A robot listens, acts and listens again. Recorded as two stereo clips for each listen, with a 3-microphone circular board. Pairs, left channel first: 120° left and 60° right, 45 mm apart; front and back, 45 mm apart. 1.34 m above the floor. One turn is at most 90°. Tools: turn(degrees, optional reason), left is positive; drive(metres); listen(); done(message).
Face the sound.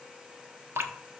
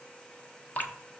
turn(degrees=-50, reason="The dripping: 50° right.")
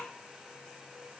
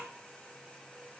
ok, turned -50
listen()
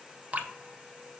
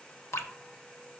done("Facing the dripping, under 1 m away.")